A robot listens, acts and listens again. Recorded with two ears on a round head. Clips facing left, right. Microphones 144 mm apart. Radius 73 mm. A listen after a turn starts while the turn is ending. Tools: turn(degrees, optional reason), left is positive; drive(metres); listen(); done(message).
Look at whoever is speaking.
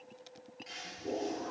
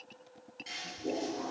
listen()
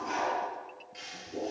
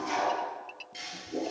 listen()
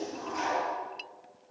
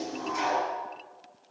done("I can't make out anyone speaking, only a toilet flushing.")